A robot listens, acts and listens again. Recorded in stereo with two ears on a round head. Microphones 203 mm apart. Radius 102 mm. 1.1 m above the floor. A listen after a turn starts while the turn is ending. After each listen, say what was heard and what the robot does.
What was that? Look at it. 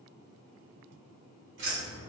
The keys jangling: about 50° right or 130° right. Turn 50° right.
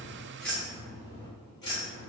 So it is at 25° left. Turn 25° left.
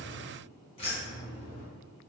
The keys jangling is now 35° left. Turn 35° left.
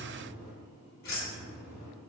The keys jangling is now 40° left. Turn 40° left.
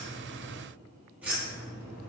Found it: keys jangling, straight ahead.